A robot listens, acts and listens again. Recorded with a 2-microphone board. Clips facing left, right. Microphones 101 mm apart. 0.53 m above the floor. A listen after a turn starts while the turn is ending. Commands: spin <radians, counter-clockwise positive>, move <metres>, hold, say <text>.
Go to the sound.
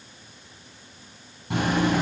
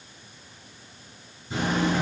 spin 1.57
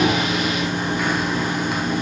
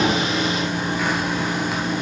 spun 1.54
move 1.0
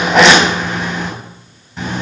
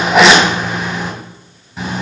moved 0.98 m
spin -0.17
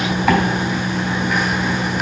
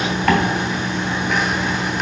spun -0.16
move 1.0
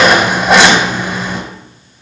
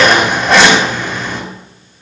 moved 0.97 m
spin 0.17
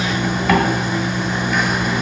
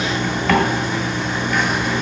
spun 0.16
move 1.0
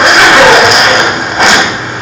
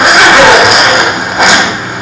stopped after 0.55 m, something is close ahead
spin -0.17
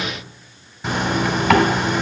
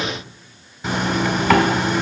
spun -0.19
say Arrived at the zipper, straight ahead.